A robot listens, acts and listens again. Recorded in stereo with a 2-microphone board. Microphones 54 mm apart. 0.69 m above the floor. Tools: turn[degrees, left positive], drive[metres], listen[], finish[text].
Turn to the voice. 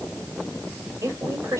Thought: The woman speaking: about 65° right or 115° right.
Action: turn[-65]
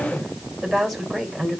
Action: finish[Facing the woman speaking, 2 to 4 m away.]